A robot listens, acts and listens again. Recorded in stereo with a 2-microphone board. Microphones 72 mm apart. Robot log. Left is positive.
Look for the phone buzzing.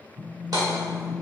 note: The phone buzzing: about 50° right or 130° right.
cmd yaw -50
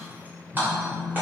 end: Found it: a phone buzzing, straight ahead.